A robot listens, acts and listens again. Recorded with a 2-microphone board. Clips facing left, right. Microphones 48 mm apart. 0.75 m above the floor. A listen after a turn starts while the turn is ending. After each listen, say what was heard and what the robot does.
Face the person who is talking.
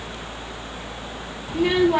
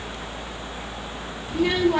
Turn 30° left.
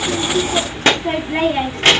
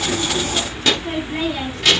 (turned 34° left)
So it is at 135° left. Turn 135° left.
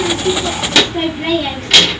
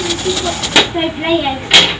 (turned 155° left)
The child speaking is now 15° right. Turn 15° right.
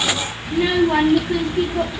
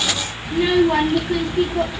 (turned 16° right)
Facing the child speaking, under 1 m away.